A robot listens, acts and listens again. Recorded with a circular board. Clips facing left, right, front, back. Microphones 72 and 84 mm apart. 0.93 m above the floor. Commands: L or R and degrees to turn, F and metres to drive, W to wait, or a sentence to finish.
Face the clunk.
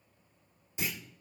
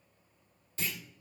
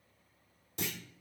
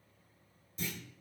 L15
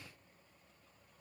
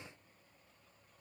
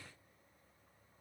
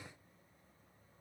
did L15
Facing where the clunk came from. I can't hear it now.